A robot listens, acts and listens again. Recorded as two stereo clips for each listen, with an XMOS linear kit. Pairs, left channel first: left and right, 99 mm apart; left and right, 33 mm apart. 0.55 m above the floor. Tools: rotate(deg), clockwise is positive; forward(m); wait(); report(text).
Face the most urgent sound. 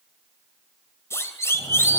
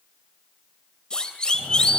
rotate(-25)
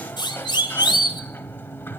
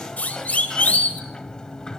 rotate(-125)
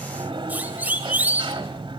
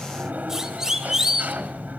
rotate(20)
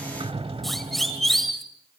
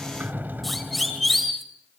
report("Facing the siren.")